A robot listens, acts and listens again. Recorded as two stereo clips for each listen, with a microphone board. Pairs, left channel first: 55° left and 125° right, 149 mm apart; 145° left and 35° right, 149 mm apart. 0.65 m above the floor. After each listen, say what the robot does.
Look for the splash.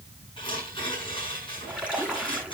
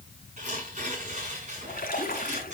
Turn 150° left.
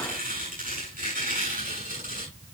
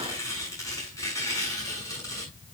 Facing where the splash came from. I can't hear it now.